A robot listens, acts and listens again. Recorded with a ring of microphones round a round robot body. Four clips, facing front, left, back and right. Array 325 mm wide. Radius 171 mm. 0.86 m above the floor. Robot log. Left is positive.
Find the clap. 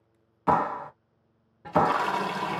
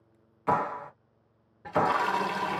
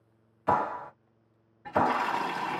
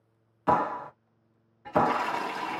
note: The clap: 30° right.
cmd yaw -30
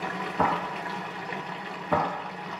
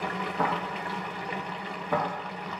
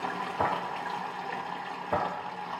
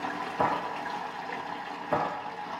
end: Facing the clap.